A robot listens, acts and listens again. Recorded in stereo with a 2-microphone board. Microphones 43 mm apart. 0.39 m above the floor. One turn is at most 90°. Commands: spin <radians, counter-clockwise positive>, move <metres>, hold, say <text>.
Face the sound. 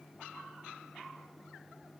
hold
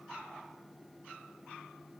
hold
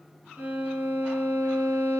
spin -0.61
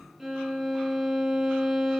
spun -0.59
say Facing the violin, over 4 m away.